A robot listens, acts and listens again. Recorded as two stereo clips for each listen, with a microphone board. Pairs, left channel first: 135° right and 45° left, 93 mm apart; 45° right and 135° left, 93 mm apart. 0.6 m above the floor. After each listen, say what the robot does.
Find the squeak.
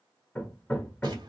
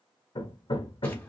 Keep listening.
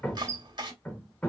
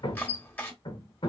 Turn 160° right.
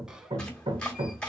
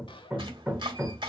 Turn 35° right.
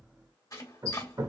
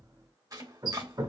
Found it: a squeak, straight ahead, under 1 m away.